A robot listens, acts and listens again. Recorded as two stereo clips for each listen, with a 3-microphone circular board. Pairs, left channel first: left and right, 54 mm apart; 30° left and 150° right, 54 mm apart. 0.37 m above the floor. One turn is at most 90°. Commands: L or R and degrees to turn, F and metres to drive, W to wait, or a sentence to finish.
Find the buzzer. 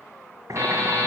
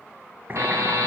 R90
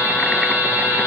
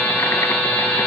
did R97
R30
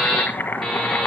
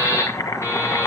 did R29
Found it: a buzzer, straight ahead.